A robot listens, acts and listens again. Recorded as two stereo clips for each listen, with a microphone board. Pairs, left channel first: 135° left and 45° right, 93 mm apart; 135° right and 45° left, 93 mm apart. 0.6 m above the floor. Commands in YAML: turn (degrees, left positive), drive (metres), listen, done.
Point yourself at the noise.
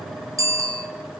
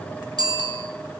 done: "Found it: a bicycle bell, straight ahead, 2 to 4 m away."